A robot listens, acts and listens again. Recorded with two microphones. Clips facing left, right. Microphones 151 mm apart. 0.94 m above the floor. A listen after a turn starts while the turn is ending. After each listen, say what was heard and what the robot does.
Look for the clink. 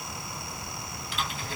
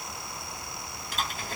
Keep listening.
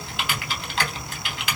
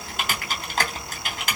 Keep listening.
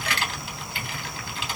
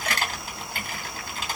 I can't make out a clink to turn to.